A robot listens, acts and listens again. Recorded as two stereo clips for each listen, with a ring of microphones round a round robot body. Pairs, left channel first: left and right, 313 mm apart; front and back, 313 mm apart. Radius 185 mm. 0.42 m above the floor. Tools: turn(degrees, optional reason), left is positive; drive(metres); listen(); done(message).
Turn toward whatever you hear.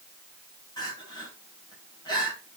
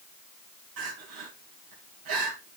turn(degrees=165, reason="The crying: 165° left.")
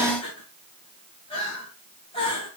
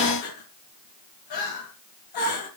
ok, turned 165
turn(degrees=15, reason="The crying is now 15° left.")
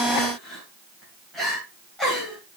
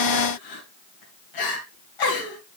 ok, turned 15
done("Facing the crying.")